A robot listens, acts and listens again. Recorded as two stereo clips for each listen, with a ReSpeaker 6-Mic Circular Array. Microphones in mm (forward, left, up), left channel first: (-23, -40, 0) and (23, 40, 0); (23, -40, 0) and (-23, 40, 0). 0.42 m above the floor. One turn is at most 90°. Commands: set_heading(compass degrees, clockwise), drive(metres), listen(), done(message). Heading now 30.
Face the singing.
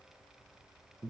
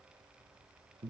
listen()
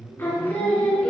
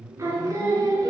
set_heading(300)
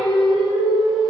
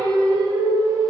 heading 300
set_heading(225)
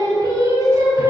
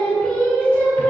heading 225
done("Facing the singing.")